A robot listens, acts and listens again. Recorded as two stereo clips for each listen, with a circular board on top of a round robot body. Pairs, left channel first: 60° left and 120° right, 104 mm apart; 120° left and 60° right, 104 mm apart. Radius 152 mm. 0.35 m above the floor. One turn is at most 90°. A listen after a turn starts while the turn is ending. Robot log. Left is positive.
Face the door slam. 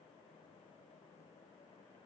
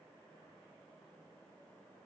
cmd idle
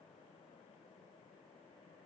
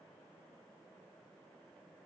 cmd idle
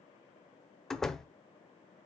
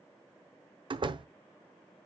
note: The door slam: 25° right.
cmd yaw -25
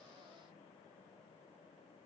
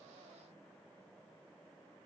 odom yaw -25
end: I heard a door slam from this way, but can't make it out now.